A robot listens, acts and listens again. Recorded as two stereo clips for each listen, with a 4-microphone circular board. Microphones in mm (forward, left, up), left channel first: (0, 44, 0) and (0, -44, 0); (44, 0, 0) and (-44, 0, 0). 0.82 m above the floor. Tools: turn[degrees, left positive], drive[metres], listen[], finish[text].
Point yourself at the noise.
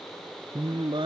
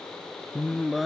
Thought: The singing: 90° right.
Action: turn[-90]
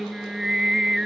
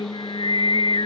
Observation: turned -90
Action: finish[Found it: singing, straight ahead.]